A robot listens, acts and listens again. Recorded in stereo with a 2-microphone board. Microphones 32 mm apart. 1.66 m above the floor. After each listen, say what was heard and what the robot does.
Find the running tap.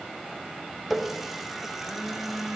Turn 30° right.
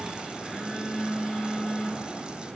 Keep listening.
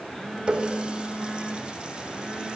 So it is at 145° right. Turn 145° right.
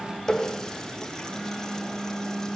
The running tap is now 20° left. Turn 20° left.
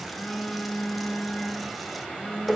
Found it: a running tap, straight ahead.